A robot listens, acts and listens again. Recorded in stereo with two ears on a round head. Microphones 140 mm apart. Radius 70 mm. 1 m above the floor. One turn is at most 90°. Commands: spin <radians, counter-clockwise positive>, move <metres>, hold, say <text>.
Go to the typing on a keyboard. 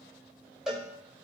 hold
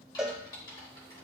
spin 0.44
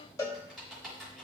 move 1.0
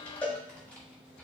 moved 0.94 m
spin 0.17
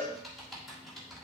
move 1.0
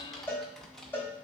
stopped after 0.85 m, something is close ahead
say I am next to the typing on a keyboard.